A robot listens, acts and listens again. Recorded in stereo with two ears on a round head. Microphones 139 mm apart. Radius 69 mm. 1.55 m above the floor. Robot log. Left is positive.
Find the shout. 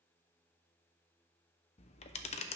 cmd idle
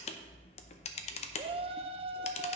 note: The shout: about 35° right or 145° right.
cmd yaw -35
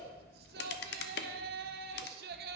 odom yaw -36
note: So it is at 110° right.
cmd yaw -110
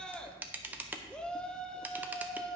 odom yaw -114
end: Found it: a shout, straight ahead.